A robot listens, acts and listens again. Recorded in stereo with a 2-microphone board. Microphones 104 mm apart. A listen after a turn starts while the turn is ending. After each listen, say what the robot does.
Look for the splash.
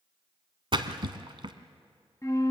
Turn 50° right.
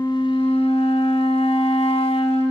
Keep listening.
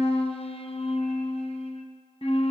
I heard a splash, but can't make it out now. It was about straight ahead or 80° right.